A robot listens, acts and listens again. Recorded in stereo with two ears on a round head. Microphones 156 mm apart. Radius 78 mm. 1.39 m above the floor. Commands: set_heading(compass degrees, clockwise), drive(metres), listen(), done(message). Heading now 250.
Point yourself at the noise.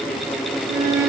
set_heading(340)
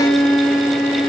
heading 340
done("Facing the violin, over 4 m away.")